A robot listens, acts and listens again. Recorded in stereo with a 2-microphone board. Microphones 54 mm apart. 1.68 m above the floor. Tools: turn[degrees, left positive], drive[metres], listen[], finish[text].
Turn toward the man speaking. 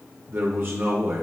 Thought: The man speaking: about 45° right or 135° right.
Action: turn[-45]
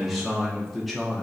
Action: finish[Facing the man speaking.]